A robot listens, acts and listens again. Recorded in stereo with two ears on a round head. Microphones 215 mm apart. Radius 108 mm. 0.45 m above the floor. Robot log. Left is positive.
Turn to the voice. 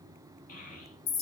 note: The child speaking: about 35° left or 145° left.
cmd yaw +35
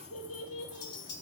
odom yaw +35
note: So it is at 110° left.
cmd yaw +110
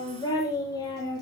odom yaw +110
note: The child speaking is now 15° left.
cmd yaw +15
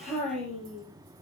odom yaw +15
end: Found it: a child speaking, straight ahead, over 4 m away.